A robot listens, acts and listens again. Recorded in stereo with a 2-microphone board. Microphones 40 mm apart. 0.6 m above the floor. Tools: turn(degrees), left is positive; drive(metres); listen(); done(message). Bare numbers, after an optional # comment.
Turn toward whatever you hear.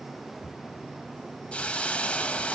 # The hiss: about 25° left or 155° left.
turn(25)
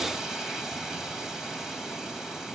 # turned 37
# So it is at 10° right.
turn(-10)
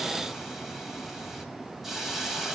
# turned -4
done("Facing the hiss, 2 to 4 m away.")